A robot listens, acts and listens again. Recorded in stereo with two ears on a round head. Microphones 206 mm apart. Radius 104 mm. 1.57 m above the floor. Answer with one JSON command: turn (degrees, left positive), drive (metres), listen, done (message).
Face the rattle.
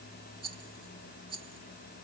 {"turn": -25}
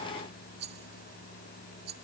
{"turn": -130}
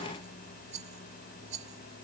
{"turn": -30}
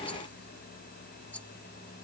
{"listen": true}
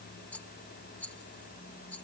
{"done": "Facing the rattle."}